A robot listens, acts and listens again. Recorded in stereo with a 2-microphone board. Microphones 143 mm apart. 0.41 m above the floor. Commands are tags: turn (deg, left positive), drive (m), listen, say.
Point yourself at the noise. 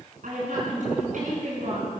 <turn deg="-70"/>
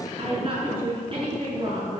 <turn deg="-40"/>
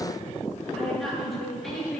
<say>Found it: a woman speaking, straight ahead.</say>